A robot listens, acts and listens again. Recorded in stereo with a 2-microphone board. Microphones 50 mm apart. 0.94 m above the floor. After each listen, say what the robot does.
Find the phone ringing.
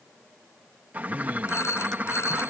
Turn 60° left.
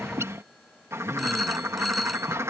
Facing the phone ringing.